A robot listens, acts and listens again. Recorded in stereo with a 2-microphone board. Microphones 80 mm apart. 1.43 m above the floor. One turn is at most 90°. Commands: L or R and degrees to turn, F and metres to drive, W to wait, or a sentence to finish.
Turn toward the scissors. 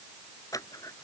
L45
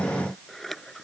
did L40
Facing the scissors.